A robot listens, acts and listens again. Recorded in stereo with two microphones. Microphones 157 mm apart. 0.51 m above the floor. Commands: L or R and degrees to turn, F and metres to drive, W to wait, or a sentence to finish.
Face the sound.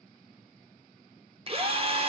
R40
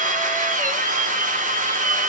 R95
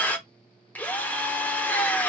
L10
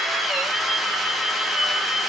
Found it: a drill, straight ahead, under 1 m away.